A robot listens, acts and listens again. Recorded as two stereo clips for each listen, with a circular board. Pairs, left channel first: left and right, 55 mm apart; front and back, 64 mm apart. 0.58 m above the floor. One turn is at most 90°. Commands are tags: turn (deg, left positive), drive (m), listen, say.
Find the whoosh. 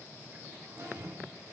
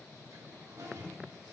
<turn deg="-75"/>
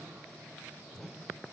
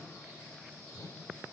<say>Found it: a whoosh, straight ahead.</say>